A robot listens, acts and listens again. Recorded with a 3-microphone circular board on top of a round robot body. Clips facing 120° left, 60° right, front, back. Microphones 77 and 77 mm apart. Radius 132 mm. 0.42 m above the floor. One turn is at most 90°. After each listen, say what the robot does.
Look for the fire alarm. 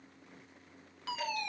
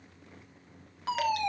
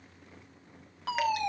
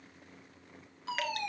Facing the fire alarm.